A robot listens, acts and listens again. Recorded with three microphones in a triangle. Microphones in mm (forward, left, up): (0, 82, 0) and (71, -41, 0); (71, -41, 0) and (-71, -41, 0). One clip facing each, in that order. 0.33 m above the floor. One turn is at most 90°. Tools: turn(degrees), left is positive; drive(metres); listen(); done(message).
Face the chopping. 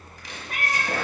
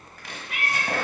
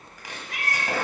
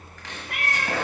turn(degrees=-75)
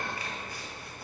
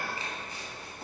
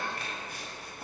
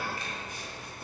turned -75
listen()
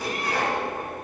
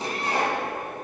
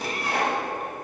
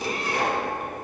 done("Facing the chopping, 1 to 2 m away.")